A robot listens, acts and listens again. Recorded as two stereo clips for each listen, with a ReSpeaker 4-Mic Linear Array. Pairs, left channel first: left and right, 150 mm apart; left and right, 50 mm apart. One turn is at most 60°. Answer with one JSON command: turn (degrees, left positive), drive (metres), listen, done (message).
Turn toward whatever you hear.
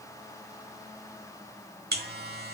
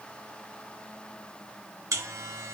{"turn": -60}
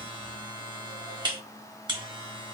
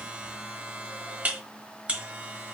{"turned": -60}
{"turn": -30}
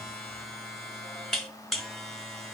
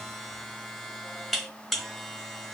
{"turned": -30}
{"done": "Facing the buzzer, under 1 m away."}